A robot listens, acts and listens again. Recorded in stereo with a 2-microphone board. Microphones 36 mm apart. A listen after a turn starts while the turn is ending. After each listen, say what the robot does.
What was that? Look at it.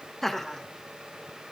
Turn 30° left.
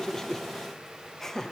Turn 20° left.
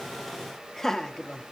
Turn 20° left.
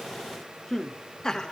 Turn 20° left.
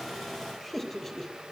Turn 30° left.
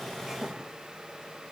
Keep listening.
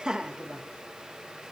Turn 20° right.
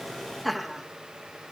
Facing the laughter, 2 to 4 m away.